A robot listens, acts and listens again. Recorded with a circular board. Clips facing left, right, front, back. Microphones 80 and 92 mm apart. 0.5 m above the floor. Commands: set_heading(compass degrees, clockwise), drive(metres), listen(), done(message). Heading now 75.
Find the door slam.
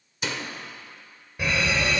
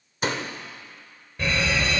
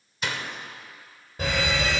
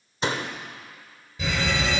set_heading(200)
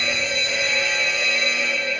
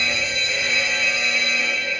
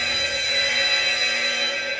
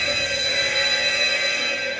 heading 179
set_heading(199)
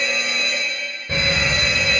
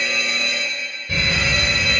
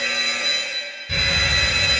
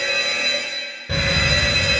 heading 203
done("Facing where the door slam came from. I can't hear it now.")